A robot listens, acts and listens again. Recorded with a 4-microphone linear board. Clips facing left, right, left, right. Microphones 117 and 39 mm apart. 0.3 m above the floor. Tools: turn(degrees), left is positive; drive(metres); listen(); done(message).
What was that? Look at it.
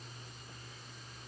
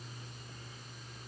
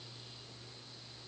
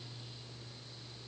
listen()
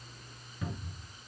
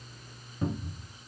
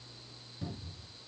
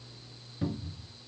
turn(degrees=-35)
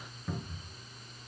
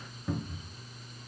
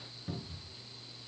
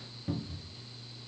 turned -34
done("Facing the cupboard door, 1 to 2 m away.")